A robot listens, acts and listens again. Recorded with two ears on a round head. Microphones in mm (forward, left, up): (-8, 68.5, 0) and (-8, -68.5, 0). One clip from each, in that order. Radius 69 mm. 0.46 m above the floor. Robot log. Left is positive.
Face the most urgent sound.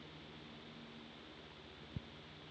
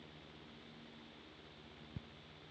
cmd idle
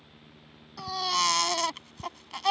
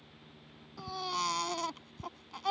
note: The baby crying: about 60° left or 120° left.
cmd yaw +60
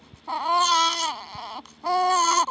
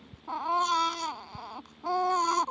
note: So it is at 55° left.
cmd yaw +55
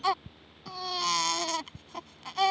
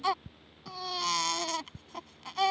end: Facing the baby crying.